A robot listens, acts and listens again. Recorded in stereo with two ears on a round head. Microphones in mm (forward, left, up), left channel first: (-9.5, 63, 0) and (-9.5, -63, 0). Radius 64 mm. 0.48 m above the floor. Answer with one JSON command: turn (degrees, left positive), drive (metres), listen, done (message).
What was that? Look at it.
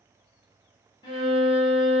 {"turn": 35}
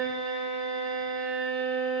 {"done": "Found it: a violin, straight ahead."}